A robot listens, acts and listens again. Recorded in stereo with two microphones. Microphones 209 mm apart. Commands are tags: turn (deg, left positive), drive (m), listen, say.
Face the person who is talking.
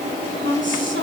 <turn deg="-65"/>
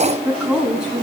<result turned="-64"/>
<say>Facing the woman speaking, 2 to 4 m away.</say>